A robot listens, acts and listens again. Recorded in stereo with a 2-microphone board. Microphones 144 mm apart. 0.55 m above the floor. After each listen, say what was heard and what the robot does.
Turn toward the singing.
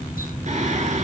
The singing: about 55° right or 125° right. Turn 55° right.
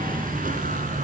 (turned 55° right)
Keep listening.
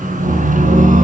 So it is at 65° right. Turn 65° right.
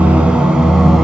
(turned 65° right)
Found it: singing, straight ahead, 2 to 4 m away.